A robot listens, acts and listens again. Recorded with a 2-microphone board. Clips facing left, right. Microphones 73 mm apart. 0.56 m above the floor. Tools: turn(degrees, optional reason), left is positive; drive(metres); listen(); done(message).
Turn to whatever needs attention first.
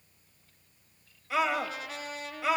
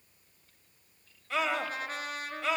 turn(degrees=30)
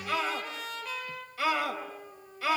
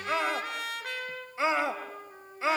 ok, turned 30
turn(degrees=-25, reason="So it is at 25° right.")
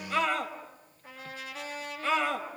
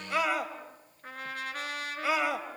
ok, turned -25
turn(degrees=-10, reason="The scream is now 10° right.")
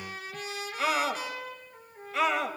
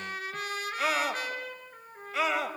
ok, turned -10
done("Found it: a scream, straight ahead, 2 to 4 m away.")